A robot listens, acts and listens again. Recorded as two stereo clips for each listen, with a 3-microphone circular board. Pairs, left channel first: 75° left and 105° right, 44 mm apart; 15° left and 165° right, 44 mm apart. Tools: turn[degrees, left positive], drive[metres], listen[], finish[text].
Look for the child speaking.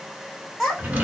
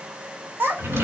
Thought: The child speaking: 160° left.
Action: turn[160]
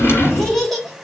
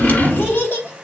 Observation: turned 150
Thought: The child speaking is now 15° right.
Action: turn[-15]
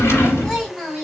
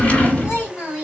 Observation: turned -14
Thought: The child speaking is now 10° right.
Action: turn[-10]
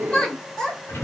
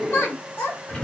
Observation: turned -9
Action: finish[Facing the child speaking, 2 to 4 m away.]